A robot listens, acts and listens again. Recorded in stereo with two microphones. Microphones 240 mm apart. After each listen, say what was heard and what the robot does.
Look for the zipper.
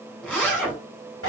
Turn 30° left.
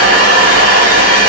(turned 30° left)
Keep listening.
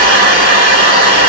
Keep listening.
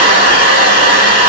I heard a zipper, but can't make it out now. It was about 25° right or 145° left.